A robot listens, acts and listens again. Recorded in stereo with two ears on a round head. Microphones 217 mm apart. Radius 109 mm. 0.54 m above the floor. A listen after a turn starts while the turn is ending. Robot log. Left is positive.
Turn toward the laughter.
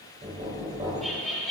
cmd yaw +30
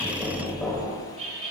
note: So it is at 30° right.
cmd yaw -30
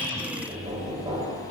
cmd idle
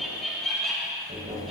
end: Facing the laughter, 2 to 4 m away.